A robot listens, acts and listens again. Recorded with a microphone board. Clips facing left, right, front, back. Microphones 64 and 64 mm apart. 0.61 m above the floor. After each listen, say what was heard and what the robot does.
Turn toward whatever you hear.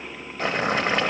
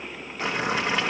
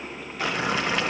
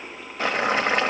The boiling: 135° left. Turn 135° left.
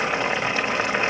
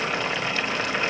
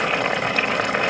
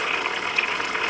The boiling is now 25° left. Turn 25° left.
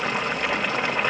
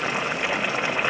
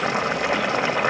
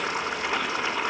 Facing the boiling.